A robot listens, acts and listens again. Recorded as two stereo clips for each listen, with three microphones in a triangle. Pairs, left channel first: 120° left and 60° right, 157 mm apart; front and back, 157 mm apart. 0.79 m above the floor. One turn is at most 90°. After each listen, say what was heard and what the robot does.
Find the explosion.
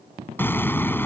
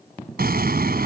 The explosion: 165° right. Turn 90° right.
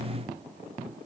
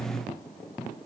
Nothing new. It was at 75° right. Turn 75° right.
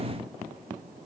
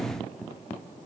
Facing where the explosion came from. I can't hear it now.